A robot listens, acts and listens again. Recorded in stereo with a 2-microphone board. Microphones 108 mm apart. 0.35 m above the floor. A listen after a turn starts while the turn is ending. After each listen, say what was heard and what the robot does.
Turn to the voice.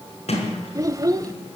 The child speaking: about 30° right or 150° right. Turn 30° right.
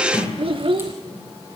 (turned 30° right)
So it is at 110° right. Turn 110° right.
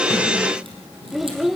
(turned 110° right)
Facing the child speaking, under 1 m away.